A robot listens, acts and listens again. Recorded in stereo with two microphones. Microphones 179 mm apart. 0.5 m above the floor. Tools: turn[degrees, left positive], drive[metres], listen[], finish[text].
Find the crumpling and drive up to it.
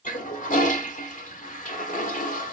Action: listen[]
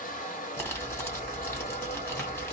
Action: turn[30]
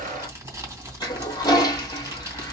Thought: So it is at 15° right.
Action: turn[-15]
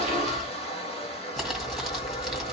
Action: drive[1.0]
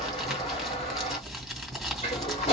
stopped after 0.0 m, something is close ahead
Action: finish[Something is in my way. I am facing the crumpling but have not reached it.]